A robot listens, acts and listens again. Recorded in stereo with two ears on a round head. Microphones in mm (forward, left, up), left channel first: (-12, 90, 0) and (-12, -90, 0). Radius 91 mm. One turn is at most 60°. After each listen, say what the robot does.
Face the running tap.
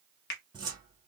Keep listening.
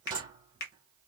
Keep listening.
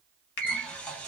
Turn 30° left.
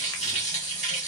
Turn 60° left.
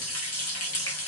Turn 60° left.
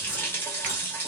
Turn 10° left.
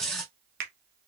Facing the running tap.